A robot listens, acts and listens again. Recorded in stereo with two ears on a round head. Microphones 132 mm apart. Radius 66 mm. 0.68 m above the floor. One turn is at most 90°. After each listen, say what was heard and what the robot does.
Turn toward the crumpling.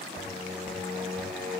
Keep listening.
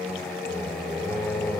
Keep listening.
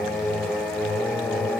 I can't make out crumpling to turn to.